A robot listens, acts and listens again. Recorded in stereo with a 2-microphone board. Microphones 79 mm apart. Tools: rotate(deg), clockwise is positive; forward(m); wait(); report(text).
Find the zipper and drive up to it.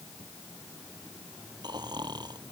wait()
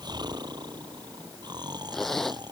rotate(-30)
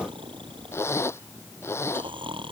rotate(-145)
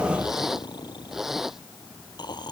forward(1.0)
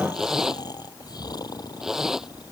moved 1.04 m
forward(1.0)
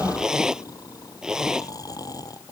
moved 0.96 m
rotate(10)
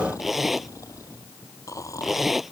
forward(1.0)
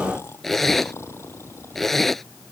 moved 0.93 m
forward(1.0)
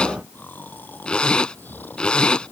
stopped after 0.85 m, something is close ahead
rotate(-10)
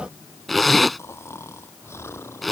report("Arrived at the zipper, straight ahead.")